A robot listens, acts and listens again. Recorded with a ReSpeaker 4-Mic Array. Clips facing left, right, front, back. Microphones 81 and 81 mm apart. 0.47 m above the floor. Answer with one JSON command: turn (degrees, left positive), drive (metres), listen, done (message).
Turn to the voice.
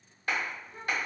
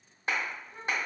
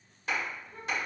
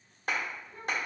{"done": "Facing the child speaking, 1 to 2 m away."}